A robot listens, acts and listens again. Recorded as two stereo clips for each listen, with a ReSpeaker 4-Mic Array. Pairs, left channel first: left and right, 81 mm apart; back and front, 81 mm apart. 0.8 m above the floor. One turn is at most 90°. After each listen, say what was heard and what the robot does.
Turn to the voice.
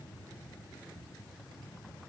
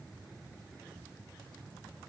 Keep listening.
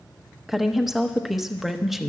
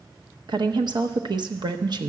Facing the woman speaking, under 1 m away.